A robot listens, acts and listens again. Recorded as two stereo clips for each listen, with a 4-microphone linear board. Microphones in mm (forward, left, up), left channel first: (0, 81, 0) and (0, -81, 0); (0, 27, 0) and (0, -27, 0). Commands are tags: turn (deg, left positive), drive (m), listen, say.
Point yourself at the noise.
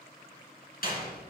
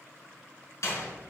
<turn deg="65"/>
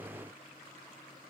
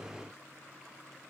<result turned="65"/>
<listen/>
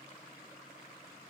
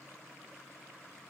<say>I heard a door slam, but can't make it out now. It was about straight ahead or 50° left.</say>